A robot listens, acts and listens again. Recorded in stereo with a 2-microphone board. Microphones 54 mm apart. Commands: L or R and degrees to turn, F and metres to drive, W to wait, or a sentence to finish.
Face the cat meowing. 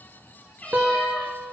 L25
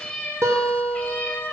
L35
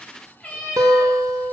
L25
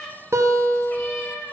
L30
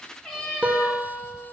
Found it: a cat meowing, straight ahead, 2 to 4 m away.